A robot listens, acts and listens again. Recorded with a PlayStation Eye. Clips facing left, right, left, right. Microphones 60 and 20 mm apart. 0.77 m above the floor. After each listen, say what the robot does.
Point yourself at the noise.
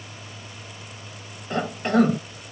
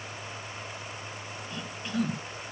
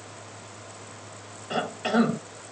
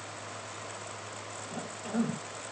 Turn 60° left.
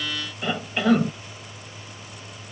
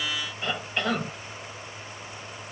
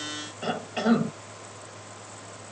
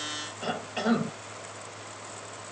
Found it: a cough, straight ahead.